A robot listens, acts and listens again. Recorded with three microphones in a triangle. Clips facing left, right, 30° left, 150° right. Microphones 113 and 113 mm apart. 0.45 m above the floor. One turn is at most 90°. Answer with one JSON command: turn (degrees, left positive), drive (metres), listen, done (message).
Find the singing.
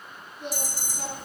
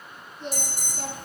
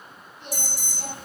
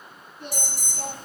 {"turn": 90}
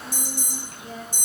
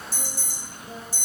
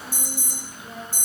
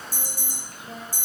{"turn": 90}
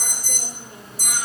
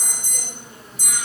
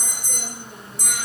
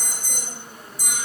{"turn": 20}
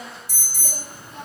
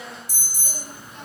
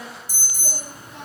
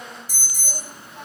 {"turn": 40}
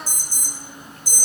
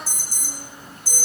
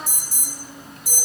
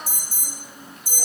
{"turn": -15}
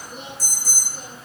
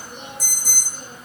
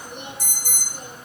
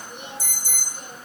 {"done": "Facing the singing, over 4 m away."}